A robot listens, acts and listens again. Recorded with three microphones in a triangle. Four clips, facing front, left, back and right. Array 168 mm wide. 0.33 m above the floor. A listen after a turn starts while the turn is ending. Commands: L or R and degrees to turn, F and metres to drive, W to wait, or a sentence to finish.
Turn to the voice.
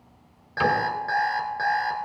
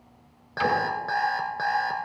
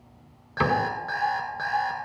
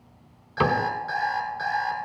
W
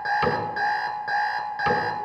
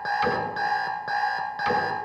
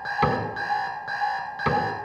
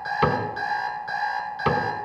W
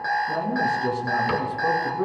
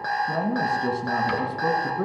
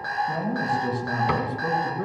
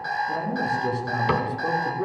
L85
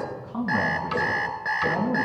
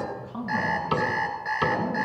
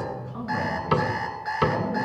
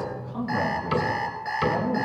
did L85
Facing the man speaking.